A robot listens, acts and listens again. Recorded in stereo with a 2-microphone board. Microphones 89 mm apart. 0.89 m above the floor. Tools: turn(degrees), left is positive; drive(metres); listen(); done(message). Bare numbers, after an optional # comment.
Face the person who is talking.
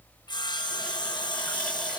listen()
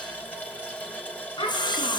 # The child speaking: about 60° left or 120° left.
turn(60)
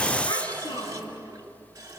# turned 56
# So it is at 60° left.
turn(60)
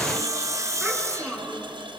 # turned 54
done("Facing the child speaking, over 4 m away.")